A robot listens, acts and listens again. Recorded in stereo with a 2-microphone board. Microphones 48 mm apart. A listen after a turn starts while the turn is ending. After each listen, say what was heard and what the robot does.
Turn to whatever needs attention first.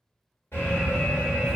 The alarm: about 60° left or 120° left. Turn 60° left.
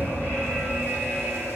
So it is at 50° left. Turn 50° left.
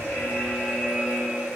Found it: an alarm, straight ahead, 1 to 2 m away.